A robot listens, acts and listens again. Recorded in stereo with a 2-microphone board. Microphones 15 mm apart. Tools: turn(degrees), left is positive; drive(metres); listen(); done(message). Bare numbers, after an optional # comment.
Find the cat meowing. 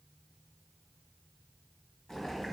listen()
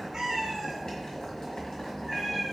turn(-30)
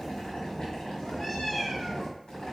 # So it is at 30° left.
turn(30)
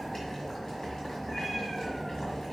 listen()
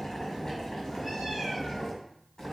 listen()
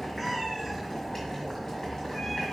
done("Facing the cat meowing, 2 to 4 m away.")